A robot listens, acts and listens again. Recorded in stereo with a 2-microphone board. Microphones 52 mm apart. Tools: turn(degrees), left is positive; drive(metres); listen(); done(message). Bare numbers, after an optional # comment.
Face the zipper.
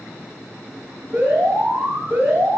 listen()
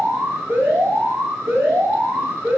listen()
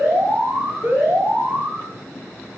done("I can't make out a zipper, only an alarm.")